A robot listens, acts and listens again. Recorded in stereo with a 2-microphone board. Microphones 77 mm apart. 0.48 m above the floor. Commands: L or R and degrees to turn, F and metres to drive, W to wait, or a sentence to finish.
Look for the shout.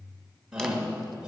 R30
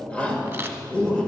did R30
L20
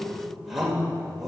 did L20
Facing the shout, 1 to 2 m away.